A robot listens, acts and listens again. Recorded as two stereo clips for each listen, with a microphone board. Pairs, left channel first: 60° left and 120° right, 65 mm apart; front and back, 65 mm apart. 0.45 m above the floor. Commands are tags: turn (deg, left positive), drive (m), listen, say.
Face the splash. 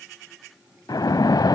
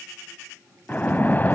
<turn deg="60"/>
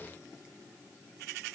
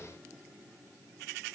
<say>I heard a splash from this way, but can't make it out now.</say>